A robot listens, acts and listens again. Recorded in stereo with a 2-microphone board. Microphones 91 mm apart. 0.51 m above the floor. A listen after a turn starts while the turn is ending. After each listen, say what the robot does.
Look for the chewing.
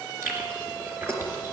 Turn 25° right.
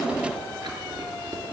Turn 125° right.
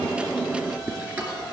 Turn 15° right.
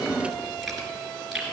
Found it: chewing, straight ahead.